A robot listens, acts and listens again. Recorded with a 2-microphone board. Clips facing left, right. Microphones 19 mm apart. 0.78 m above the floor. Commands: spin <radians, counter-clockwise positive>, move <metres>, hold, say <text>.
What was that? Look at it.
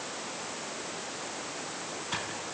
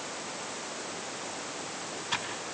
spin -0.35
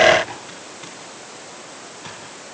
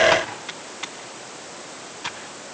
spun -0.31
spin -2.53
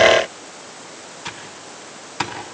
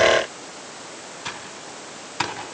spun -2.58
say Found it: typing on a keyboard, straight ahead.